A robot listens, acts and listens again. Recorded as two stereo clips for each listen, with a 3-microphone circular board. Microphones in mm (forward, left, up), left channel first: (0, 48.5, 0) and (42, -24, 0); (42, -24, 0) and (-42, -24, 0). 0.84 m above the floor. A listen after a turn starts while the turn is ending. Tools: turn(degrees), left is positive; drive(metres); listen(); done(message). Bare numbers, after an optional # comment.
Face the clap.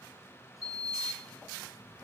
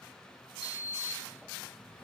listen()
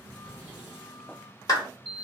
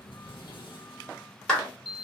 # The clap: 80° left.
turn(80)
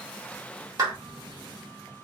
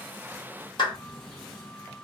# The clap is now 15° right.
turn(-15)
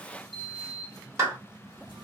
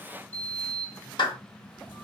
done("Found it: a clap, straight ahead.")